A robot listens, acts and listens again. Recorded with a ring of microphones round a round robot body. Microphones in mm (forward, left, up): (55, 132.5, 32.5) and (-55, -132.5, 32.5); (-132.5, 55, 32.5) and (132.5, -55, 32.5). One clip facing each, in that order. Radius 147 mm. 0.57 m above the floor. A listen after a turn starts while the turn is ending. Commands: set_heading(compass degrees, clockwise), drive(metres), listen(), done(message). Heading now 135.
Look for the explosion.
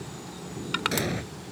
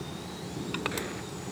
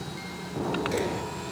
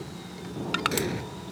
set_heading(95)
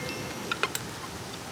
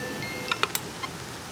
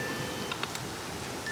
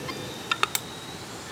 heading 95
done("Facing where the explosion came from. I can't hear it now.")